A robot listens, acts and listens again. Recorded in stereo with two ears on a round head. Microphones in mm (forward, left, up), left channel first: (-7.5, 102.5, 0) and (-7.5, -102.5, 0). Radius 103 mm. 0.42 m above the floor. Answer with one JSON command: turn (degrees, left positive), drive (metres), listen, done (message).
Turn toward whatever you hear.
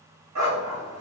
{"turn": -90}
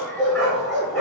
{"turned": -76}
{"done": "Found it: a dog barking, straight ahead, 1 to 2 m away."}